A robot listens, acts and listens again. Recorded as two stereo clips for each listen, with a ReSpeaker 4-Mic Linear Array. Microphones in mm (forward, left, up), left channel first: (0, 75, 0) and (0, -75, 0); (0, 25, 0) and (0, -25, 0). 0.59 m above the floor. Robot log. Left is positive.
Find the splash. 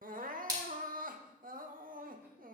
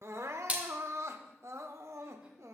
note: The splash: about 25° right or 155° right.
cmd yaw -25
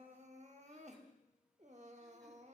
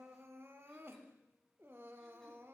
cmd idle
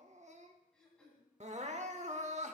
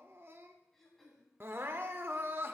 end: I heard a splash, but can't make it out now. It was about straight ahead or 130° right.